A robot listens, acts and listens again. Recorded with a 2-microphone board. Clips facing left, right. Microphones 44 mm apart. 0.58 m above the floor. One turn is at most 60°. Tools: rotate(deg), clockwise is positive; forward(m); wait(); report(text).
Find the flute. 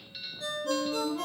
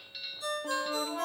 rotate(50)
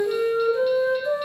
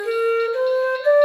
rotate(60)
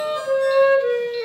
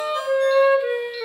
rotate(15)
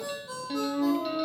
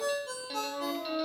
report("Facing the flute.")